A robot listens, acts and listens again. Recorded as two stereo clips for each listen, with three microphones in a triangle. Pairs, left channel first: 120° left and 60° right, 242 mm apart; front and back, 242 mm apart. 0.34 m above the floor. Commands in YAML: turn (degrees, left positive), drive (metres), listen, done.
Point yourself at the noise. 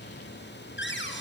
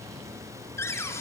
turn: 80
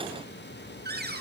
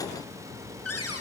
turn: -10
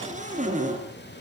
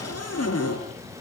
done: "Found it: a cupboard door, straight ahead, 2 to 4 m away."